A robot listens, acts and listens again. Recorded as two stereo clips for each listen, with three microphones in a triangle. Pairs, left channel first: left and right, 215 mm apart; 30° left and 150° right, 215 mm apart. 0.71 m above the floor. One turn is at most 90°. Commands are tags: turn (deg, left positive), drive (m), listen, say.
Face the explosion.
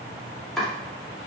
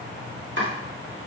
<listen/>
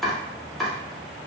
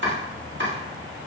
<listen/>
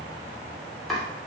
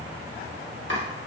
<say>I can't make out an explosion, only chopping.</say>